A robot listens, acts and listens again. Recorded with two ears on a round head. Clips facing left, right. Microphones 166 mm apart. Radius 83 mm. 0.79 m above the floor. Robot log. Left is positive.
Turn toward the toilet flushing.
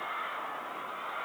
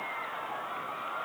cmd idle
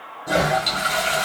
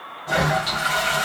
note: The toilet flushing: about 45° left or 135° left.
cmd yaw +45
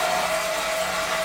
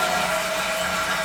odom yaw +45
end: Facing the toilet flushing, 1 to 2 m away.